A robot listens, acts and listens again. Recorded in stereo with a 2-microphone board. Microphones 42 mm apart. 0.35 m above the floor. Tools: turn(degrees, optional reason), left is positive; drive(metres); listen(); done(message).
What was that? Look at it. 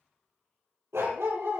turn(degrees=-90)
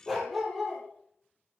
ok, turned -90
done("Facing the dog barking.")